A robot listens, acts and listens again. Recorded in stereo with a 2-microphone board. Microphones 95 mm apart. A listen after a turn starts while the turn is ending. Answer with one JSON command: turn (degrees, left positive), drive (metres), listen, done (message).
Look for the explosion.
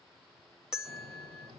{"turn": -90}
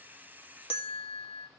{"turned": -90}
{"done": "I heard an explosion from this way, but can't make it out now."}